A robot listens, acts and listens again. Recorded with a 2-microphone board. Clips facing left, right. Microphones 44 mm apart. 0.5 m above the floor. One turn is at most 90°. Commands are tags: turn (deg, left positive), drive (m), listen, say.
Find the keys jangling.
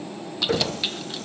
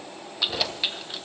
<turn deg="-30"/>
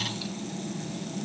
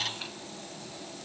<listen/>
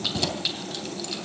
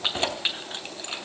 <turn deg="-90"/>
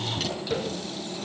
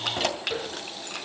<turn deg="-80"/>
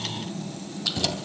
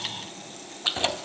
<turn deg="-30"/>
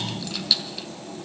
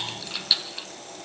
<turn deg="-15"/>
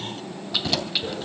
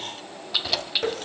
<say>Facing the keys jangling.</say>